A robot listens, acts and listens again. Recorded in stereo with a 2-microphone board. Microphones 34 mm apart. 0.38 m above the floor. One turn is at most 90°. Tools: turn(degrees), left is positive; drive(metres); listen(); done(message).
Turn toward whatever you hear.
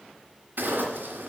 turn(degrees=-70)
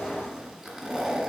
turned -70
done("Found it: a zipper, straight ahead, 1 to 2 m away.")